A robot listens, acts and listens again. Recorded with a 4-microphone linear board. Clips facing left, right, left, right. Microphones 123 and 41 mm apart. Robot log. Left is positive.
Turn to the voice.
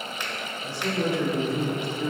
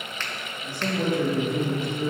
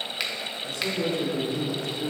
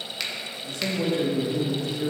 note: The man speaking: about 50° right or 130° right.
cmd yaw -50
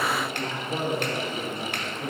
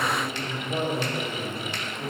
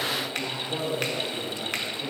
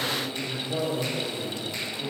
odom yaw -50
end: Found it: a man speaking, straight ahead, 1 to 2 m away.